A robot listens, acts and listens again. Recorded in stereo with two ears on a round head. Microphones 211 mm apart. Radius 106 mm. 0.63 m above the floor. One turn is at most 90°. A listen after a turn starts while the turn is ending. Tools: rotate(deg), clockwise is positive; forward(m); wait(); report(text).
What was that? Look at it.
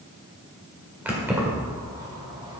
rotate(30)
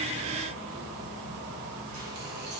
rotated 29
rotate(90)
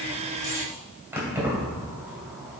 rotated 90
report("Facing the keys jangling.")